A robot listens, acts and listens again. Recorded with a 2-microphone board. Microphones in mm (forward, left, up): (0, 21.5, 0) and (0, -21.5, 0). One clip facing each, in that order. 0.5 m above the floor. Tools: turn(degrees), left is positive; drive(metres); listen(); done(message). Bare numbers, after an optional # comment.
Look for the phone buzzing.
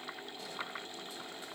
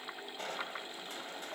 listen()
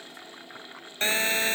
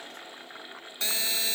# The phone buzzing: about 45° left or 135° left.
turn(45)
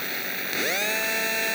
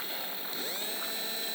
# So it is at 90° left.
turn(90)
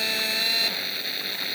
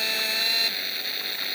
done("Facing the phone buzzing.")